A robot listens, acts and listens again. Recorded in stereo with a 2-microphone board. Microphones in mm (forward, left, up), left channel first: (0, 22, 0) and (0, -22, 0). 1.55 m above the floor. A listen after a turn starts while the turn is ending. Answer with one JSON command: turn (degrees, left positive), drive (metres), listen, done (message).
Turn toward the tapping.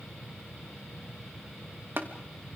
{"turn": -60}
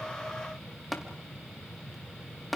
{"done": "Facing the tapping."}